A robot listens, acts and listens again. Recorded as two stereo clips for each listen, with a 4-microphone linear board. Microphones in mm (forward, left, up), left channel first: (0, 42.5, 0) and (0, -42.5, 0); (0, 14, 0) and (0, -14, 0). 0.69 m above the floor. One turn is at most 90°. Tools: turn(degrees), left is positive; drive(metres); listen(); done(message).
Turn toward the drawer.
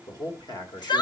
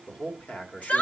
listen()
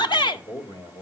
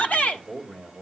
listen()
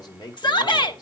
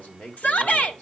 done("I can't make out a drawer to turn to.")